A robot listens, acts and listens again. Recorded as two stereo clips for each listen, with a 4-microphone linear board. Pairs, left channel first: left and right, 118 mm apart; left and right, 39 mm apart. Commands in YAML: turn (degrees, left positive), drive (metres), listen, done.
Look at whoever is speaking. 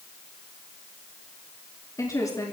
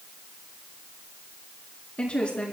turn: 30
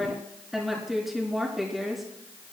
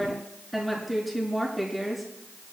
done: "Found it: a woman speaking, straight ahead, over 4 m away."